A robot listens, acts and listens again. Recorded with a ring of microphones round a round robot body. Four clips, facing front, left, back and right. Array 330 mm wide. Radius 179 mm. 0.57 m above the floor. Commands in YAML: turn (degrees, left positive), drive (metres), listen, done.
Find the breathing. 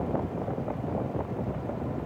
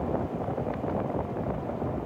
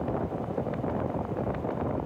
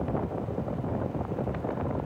listen: true
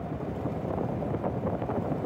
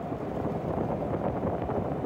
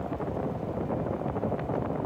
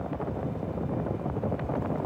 listen: true
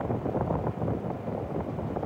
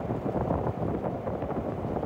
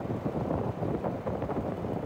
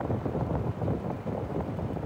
done: "I can't make out breathing to turn to."